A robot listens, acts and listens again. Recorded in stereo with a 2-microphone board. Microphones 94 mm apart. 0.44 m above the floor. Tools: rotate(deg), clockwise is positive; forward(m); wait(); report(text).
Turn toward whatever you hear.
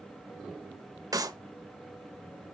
rotate(40)
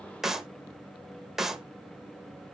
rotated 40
report("Found it: a clap, straight ahead, 1 to 2 m away.")